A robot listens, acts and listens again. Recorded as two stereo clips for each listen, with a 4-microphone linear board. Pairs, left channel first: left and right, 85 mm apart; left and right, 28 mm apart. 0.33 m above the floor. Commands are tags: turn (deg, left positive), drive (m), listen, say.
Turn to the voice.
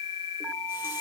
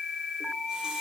<listen/>
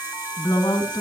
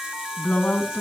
<turn deg="65"/>
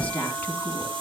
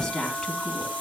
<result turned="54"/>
<turn deg="20"/>
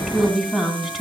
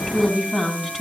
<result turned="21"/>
<say>Found it: a woman speaking, straight ahead, 2 to 4 m away.</say>